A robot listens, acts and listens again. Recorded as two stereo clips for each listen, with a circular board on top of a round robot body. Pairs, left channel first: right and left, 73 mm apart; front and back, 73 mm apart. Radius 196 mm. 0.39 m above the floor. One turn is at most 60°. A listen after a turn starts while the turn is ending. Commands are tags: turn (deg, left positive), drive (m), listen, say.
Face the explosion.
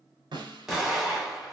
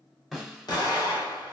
<turn deg="10"/>
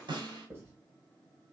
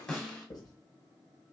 <say>Facing where the explosion came from. I can't hear it now.</say>